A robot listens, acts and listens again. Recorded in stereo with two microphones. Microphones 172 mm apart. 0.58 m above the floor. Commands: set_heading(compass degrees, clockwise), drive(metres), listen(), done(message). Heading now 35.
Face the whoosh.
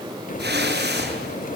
set_heading(125)
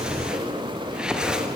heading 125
done("Facing the whoosh.")